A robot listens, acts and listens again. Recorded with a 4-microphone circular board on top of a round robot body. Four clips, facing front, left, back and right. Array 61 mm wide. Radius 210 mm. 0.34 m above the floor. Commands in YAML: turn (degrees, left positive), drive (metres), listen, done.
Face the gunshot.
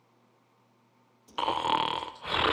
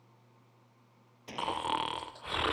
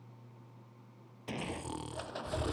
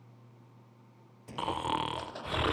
turn: 160
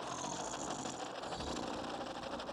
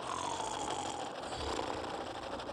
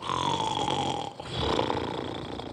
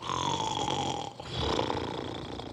done: "Facing where the gunshot came from. I can't hear it now."